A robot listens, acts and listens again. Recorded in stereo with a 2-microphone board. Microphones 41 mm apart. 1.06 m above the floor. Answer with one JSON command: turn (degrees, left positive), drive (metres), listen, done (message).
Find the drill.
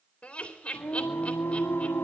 {"listen": true}
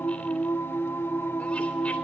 {"listen": true}
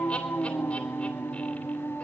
{"done": "I can't make out a drill to turn to."}